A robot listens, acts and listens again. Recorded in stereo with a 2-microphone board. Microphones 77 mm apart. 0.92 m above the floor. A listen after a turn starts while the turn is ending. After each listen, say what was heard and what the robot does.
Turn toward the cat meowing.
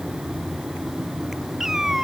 Turn 30° right.
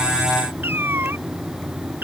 So it is at 155° right. Turn 155° right.
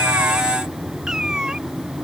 The cat meowing is now 10° right. Turn 10° right.
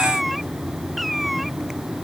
Facing the cat meowing.